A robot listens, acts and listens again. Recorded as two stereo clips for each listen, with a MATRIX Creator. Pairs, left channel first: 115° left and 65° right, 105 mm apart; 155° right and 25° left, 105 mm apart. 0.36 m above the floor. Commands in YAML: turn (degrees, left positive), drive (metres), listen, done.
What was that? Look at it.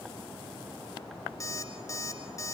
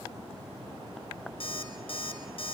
turn: 170
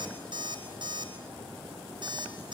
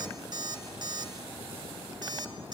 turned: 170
turn: -25
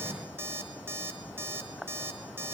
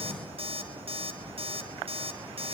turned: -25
done: "Facing the alarm clock."